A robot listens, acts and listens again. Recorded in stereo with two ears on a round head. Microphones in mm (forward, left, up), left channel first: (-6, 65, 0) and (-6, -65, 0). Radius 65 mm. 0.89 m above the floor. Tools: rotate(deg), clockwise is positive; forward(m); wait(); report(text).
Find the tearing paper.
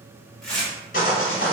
rotate(-30)
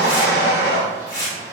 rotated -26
rotate(-150)
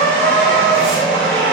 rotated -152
wait()
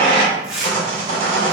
report("Found it: tearing paper, straight ahead, 1 to 2 m away.")